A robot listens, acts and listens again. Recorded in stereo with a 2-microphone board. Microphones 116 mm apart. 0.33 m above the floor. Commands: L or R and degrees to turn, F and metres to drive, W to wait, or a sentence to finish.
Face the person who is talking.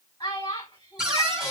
L40
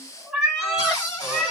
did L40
W
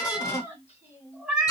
L95
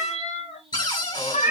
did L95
W
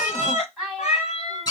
Facing the child speaking, 1 to 2 m away.